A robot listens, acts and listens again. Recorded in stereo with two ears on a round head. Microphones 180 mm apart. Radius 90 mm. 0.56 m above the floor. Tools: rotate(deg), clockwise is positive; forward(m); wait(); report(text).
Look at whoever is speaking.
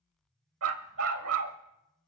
wait()
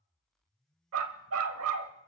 wait()
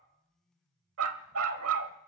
report("I can't make out anyone speaking, only a dog barking.")